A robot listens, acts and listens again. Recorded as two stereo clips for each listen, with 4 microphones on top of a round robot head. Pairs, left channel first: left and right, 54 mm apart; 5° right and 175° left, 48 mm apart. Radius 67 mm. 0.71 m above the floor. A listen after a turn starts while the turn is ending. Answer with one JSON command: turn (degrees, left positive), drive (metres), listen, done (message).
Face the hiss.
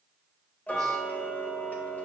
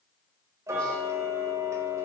{"listen": true}
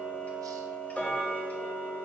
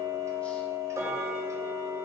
{"listen": true}
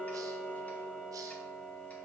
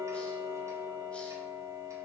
{"done": "I can't make out a hiss to turn to."}